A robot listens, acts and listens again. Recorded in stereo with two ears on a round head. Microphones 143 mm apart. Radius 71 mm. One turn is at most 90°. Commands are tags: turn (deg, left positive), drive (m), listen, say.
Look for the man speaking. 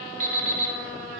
<listen/>
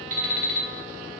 <listen/>
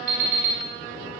<say>I can't make out a man speaking, only an alarm clock.</say>